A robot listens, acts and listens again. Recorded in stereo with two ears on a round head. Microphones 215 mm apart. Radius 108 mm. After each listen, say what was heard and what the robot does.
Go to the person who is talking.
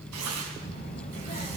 The child speaking: about 25° left or 155° left. Turn 25° left.
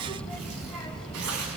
Drive 1.0 m forward.
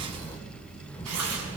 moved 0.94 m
The child speaking is now 10° left. Turn 10° left.
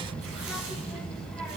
Drive 1.0 m forward.
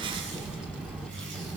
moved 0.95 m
Drive 1.0 m forward.
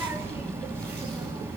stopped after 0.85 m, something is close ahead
The child speaking is now 10° right. Turn 10° right.
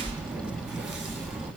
Arrived at the child speaking, straight ahead.